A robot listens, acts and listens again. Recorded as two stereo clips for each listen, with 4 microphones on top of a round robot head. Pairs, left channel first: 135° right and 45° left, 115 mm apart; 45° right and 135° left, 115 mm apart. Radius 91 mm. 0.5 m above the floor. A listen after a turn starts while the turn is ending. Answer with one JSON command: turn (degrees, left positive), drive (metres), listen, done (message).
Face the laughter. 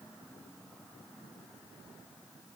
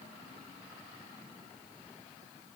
{"listen": true}
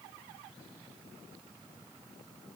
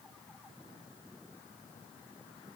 {"listen": true}
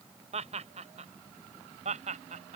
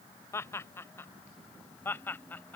{"turn": 30}
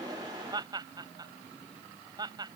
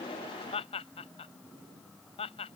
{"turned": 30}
{"turn": -10}
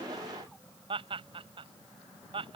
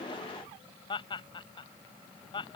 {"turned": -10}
{"done": "Found it: laughter, straight ahead."}